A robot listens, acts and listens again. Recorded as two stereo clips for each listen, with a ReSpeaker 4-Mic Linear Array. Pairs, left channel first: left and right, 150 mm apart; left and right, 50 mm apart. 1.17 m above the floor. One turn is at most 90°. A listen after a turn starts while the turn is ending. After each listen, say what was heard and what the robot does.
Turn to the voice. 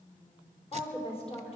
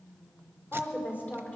The woman speaking: about 40° left or 140° left. Turn 40° left.
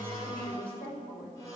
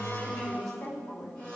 So it is at 95° left. Turn 90° left.
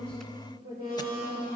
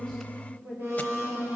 The woman speaking is now 30° right. Turn 30° right.
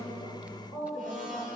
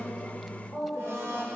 Found it: a woman speaking, straight ahead, over 4 m away.